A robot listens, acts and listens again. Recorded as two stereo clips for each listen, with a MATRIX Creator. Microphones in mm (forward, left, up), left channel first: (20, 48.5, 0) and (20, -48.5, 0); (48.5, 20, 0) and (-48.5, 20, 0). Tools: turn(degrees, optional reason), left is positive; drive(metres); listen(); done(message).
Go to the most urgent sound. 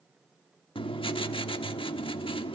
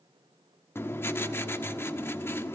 listen()
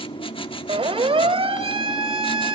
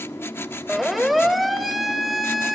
turn(degrees=-90, reason="The siren: 90° right.")
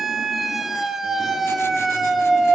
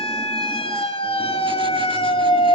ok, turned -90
drive(metres=1.0)
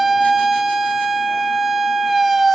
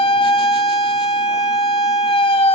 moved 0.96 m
drive(metres=1.0)
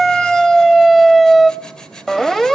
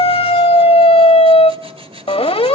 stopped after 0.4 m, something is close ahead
done("I am next to the siren.")